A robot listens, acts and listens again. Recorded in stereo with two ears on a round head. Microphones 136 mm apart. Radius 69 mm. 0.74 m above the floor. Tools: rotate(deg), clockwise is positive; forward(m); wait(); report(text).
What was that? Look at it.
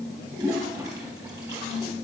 rotate(25)
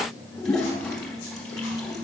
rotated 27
report("Found it: a toilet flushing, straight ahead, 2 to 4 m away.")